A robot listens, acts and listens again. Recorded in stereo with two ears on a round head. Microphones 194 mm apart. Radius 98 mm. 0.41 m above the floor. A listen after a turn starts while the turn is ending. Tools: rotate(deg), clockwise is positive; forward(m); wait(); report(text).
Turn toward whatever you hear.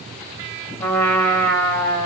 rotate(-30)
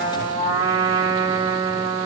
rotate(20)
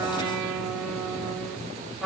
report("Found it: a trumpet, straight ahead.")